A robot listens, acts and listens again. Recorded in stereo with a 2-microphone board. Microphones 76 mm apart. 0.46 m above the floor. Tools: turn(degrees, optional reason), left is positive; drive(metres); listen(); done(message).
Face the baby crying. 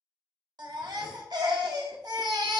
turn(degrees=-70, reason="The baby crying: about 70° right or 110° right.")
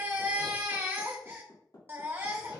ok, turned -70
turn(degrees=-30, reason="So it is at 30° right.")
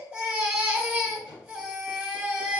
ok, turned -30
turn(degrees=-15, reason="The baby crying is now 15° right.")
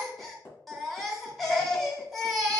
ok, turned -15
done("Found it: a baby crying, straight ahead, under 1 m away.")